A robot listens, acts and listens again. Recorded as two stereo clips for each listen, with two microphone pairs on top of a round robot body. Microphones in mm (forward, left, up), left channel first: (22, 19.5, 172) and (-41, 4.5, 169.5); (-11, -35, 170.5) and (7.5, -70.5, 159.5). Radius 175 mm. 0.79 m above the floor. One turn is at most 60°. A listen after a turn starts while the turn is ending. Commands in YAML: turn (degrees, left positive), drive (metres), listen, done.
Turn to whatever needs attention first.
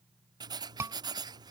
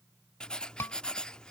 turn: 60
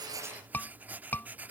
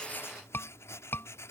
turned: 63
turn: 60
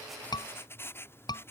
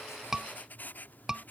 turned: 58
turn: 15
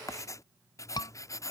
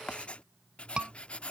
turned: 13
done: "Facing the scream."